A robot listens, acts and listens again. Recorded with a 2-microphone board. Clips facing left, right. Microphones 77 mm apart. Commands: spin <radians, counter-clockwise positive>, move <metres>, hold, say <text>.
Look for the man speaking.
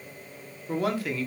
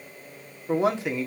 spin -0.35
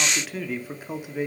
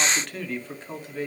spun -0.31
spin 0.26
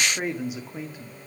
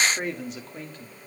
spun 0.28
spin 0.17
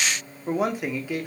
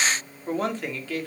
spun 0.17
spin 0.26
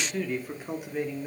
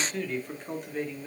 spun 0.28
spin 0.17
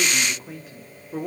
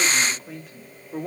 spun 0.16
say Found it: a man speaking, straight ahead, 2 to 4 m away.